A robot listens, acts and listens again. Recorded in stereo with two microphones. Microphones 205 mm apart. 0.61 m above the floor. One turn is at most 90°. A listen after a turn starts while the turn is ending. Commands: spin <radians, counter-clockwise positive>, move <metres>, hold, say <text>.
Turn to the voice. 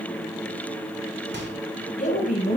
spin 0.70
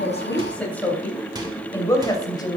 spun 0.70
spin 0.35
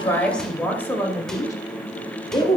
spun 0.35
spin 0.44
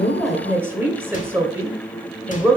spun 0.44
spin -0.17
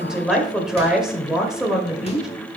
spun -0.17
say Facing the woman speaking.